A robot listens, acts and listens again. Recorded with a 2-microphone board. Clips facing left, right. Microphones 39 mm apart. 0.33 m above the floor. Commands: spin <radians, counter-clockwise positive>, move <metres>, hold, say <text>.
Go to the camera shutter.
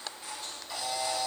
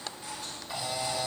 spin -0.52
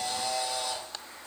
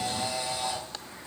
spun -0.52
spin -2.36
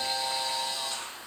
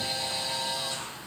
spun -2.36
move 1.0
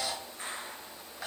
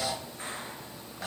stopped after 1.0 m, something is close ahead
say Arrived at the camera shutter, straight ahead.